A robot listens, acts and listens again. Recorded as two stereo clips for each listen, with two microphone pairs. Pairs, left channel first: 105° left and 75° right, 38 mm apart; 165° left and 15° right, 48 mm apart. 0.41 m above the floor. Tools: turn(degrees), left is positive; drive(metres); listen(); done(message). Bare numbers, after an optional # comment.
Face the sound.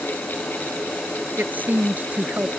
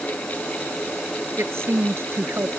# The woman speaking: 40° right.
turn(-40)
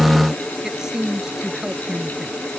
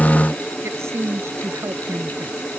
done("Facing the woman speaking.")